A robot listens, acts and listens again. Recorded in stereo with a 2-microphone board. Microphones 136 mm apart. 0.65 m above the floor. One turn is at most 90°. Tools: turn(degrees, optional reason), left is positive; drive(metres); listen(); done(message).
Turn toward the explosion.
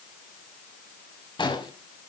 turn(degrees=35, reason="The explosion: about 35° left or 145° left.")
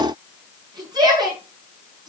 listen()
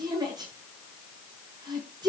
done("I heard an explosion, but can't make it out now. It was about straight ahead or 110° left.")